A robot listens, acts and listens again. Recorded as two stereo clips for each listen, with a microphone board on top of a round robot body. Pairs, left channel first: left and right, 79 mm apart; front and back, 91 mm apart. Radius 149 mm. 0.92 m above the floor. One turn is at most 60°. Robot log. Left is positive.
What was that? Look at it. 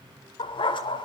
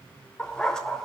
note: The dog barking: 85° left.
cmd yaw +60
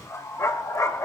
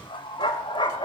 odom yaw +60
note: The dog barking is now 40° left.
cmd yaw +40
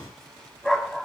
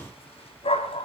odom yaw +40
note: The dog barking is now 10° left.
cmd yaw +10
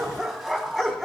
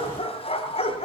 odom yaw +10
end: Found it: a dog barking, straight ahead, 2 to 4 m away.